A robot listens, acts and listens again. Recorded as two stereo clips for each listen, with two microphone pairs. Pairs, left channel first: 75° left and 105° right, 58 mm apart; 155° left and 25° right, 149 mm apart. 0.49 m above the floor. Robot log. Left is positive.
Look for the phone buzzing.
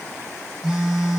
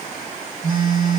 note: The phone buzzing: 25° right.
cmd yaw -25
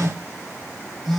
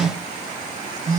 note: The phone buzzing is now 20° right.
cmd yaw -20
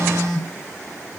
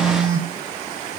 end: Facing the phone buzzing.